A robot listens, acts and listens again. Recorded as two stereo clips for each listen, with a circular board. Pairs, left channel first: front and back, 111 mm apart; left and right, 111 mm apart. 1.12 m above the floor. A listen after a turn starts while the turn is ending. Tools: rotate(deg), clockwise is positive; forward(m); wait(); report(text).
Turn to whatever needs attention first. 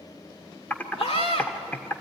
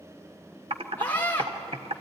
rotate(-15)
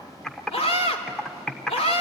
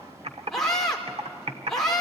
report("Found it: a scream, straight ahead.")